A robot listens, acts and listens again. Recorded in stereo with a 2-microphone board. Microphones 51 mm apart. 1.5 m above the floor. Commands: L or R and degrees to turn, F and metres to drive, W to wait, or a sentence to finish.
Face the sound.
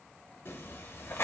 L55
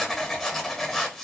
L10
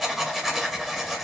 Found it: writing, straight ahead, 1 to 2 m away.